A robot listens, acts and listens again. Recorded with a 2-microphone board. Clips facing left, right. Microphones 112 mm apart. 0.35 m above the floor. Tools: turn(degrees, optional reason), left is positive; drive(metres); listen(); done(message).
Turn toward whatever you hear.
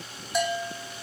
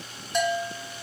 turn(degrees=30)
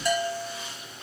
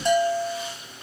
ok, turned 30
turn(degrees=-25, reason="So it is at 25° right.")
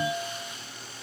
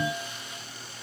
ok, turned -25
turn(degrees=-20, reason="The bell is now 20° right.")
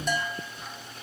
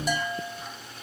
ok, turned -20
done("Facing the bell.")